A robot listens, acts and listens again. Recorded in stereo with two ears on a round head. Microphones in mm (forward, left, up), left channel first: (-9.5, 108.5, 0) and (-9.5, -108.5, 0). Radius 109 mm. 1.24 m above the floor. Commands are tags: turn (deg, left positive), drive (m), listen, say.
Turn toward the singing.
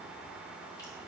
<listen/>
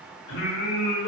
<turn deg="55"/>
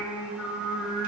<say>Found it: singing, straight ahead.</say>